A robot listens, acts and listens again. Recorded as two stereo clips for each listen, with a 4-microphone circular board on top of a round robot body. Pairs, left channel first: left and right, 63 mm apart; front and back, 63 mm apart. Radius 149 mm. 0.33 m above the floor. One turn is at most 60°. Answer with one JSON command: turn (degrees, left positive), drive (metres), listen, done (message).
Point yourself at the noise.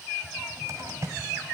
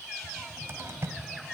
{"turn": -60}
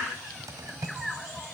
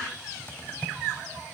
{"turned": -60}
{"turn": -60}
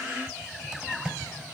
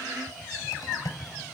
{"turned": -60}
{"turn": -15}
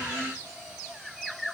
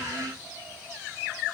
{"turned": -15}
{"listen": true}
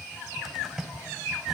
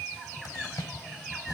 {"done": "Found it: a cupboard door, straight ahead, 1 to 2 m away."}